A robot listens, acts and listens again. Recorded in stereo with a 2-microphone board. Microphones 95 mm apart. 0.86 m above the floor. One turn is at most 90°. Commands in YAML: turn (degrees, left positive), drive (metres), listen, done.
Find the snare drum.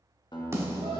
turn: -30
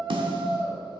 turn: -90
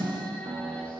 turn: -50
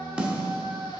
turn: -10
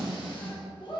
done: "Found it: a snare drum, straight ahead."